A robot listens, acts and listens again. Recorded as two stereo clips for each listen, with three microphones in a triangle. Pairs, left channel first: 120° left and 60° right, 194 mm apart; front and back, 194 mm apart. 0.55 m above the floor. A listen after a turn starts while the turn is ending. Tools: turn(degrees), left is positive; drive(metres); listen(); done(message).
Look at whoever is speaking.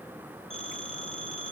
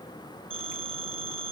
listen()
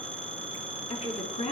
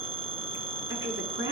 turn(degrees=175)
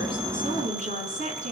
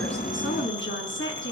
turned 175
turn(degrees=-10)
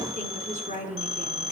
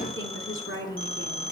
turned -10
done("Found it: a woman speaking, straight ahead, over 4 m away.")